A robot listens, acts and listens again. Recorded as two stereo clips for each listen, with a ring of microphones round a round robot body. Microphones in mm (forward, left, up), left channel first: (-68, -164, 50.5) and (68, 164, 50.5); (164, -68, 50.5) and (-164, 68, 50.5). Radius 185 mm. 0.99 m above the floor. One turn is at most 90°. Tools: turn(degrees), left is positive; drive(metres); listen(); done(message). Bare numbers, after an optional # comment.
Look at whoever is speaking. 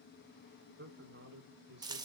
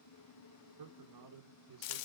# The man speaking: 125° left.
turn(90)
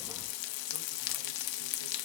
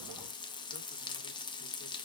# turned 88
# Nothing new. It was at 40° left.
turn(40)
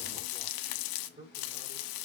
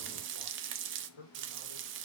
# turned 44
done("Facing the man speaking, 2 to 4 m away.")